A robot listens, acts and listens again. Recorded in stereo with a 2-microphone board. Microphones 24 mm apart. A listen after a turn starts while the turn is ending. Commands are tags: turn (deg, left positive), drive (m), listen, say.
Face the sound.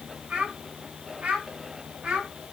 <turn deg="-65"/>
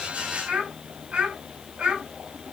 <turn deg="-55"/>
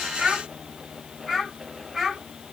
<say>Found it: a child speaking, straight ahead.</say>